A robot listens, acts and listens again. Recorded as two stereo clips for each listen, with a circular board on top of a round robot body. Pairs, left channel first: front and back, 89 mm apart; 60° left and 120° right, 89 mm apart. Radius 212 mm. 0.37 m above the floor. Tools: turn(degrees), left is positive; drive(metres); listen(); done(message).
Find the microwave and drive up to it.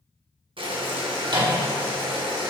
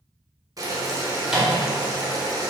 turn(degrees=155)
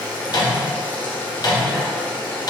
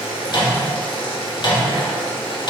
turn(degrees=35)
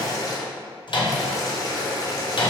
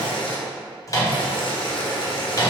turn(degrees=15)
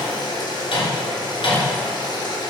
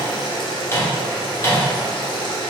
drive(metres=1.0)
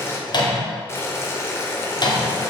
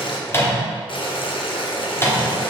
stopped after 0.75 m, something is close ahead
done("I am next to the microwave.")